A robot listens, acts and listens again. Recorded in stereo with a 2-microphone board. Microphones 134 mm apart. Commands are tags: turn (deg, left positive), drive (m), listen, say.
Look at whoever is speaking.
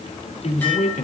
<turn deg="65"/>
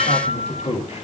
<turn deg="50"/>
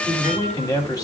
<turn deg="25"/>
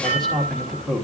<say>Found it: a man speaking, straight ahead, 2 to 4 m away.</say>